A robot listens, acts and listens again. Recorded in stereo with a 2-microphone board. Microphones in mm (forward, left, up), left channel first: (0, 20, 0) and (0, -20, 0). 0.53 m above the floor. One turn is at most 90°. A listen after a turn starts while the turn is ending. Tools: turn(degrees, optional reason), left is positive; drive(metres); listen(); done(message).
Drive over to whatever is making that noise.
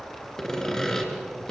turn(degrees=15, reason="The sawing: about 15° left or 165° left.")
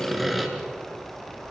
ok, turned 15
drive(metres=1.0)
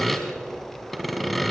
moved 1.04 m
drive(metres=1.0)
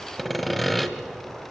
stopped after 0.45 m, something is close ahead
done("I am next to the sawing.")